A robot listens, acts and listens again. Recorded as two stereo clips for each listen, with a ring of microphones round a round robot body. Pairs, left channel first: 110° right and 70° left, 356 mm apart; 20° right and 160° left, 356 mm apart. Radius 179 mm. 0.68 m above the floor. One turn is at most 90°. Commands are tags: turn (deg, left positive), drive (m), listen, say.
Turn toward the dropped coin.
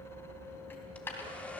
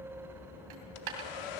<turn deg="90"/>
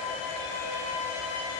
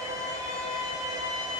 <turn deg="75"/>
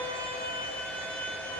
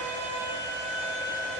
<say>Facing where the dropped coin came from. I can't hear it now.</say>